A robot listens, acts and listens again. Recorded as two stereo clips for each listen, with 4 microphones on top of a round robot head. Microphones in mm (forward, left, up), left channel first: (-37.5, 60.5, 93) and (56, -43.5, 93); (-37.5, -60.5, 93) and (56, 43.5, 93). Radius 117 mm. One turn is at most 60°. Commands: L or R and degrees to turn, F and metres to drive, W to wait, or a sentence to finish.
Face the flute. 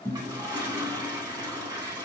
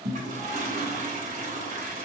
W
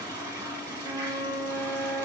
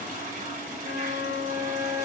R60
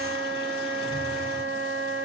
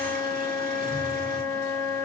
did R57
R60
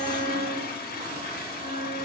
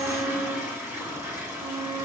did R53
R15
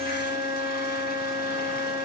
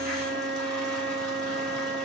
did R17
Found it: a flute, straight ahead, 1 to 2 m away.